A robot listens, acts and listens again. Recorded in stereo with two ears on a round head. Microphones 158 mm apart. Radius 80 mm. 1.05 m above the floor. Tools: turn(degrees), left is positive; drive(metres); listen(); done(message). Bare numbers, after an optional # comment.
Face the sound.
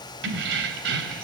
# The keys jangling: about 65° right or 115° right.
turn(-65)
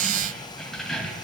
done("Found it: keys jangling, straight ahead.")